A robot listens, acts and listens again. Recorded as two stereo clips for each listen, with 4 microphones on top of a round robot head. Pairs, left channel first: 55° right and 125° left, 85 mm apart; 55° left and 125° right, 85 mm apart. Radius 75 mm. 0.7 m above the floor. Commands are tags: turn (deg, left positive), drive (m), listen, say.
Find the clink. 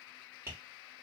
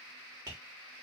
<listen/>
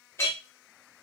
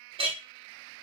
<turn deg="-120"/>
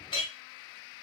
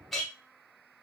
<turn deg="-35"/>
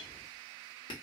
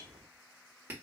<listen/>
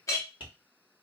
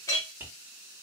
<say>Found it: a clink, straight ahead.</say>